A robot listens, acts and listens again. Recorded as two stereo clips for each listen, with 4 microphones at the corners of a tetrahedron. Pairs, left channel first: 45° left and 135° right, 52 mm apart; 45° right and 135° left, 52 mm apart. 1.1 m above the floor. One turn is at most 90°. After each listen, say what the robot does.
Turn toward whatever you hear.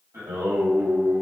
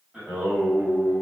Turn 90° right.
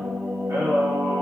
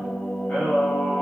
Turn 90° right.
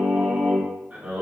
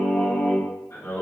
Turn 75° right.
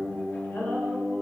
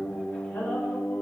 Found it: singing, straight ahead.